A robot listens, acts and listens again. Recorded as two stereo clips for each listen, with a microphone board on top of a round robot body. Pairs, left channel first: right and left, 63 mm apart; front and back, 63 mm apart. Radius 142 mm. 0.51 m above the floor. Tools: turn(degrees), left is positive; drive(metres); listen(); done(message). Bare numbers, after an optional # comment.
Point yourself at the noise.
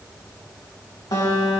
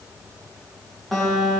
# The guitar: 90° right.
turn(-90)
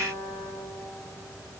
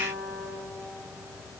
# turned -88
done("Facing the guitar.")